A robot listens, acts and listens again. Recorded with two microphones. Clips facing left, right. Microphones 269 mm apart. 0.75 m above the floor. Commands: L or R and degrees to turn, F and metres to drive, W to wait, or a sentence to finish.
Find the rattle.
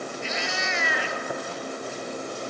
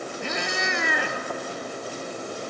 W
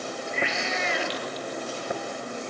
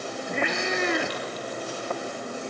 W
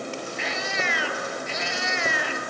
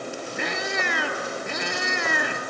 I can't make out a rattle to turn to.